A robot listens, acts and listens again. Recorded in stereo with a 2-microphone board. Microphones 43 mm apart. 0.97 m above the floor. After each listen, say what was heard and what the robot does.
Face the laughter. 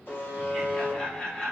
The laughter: about 30° left or 150° left. Turn 30° left.
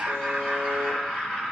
The laughter: about 25° left or 155° left. Turn 25° left.
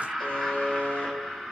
The laughter: about 15° left or 165° left. Turn 15° left.
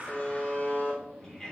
So it is at 15° left. Turn 15° left.
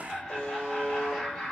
Facing the laughter, 2 to 4 m away.